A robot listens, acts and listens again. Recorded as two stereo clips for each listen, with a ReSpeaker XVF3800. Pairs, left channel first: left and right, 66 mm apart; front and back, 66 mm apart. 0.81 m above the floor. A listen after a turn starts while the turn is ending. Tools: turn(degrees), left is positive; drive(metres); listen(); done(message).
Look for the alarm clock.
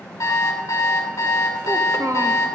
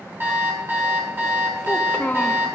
turn(degrees=120)
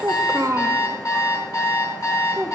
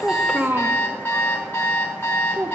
turn(degrees=60)
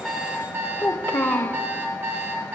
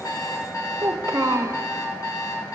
turn(degrees=-30)
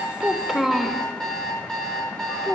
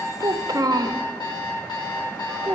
turn(degrees=10)
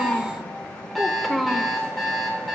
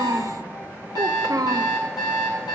done("Found it: an alarm clock, straight ahead.")